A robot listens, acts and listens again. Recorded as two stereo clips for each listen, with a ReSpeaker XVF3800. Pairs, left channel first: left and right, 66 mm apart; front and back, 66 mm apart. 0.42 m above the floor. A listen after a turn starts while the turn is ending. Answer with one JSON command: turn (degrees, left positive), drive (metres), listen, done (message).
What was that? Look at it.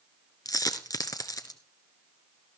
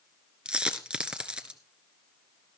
{"turn": 105}
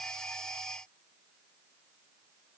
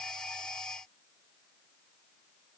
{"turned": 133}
{"turn": -30}
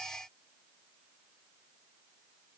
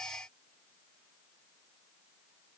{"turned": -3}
{"turn": -25}
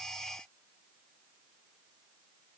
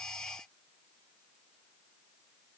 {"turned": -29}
{"done": "I heard a dropped coin from this way, but can't make it out now."}